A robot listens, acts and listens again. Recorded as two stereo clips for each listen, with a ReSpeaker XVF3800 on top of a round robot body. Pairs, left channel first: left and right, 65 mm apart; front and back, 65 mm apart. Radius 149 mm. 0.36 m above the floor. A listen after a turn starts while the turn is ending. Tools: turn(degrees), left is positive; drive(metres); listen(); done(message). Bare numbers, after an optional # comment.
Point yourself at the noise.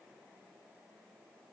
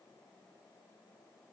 listen()
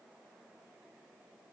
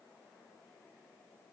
listen()
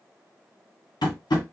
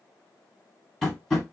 # The tapping: 80° left.
turn(80)
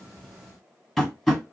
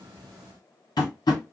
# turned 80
done("Facing the tapping.")